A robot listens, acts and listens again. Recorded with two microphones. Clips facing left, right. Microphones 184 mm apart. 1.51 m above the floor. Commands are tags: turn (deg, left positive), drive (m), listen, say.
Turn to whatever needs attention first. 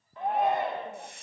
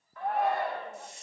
<turn deg="20"/>
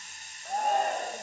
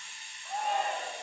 <turn deg="135"/>
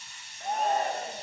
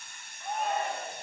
<turn deg="40"/>
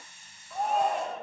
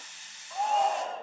<say>Found it: a shout, straight ahead.</say>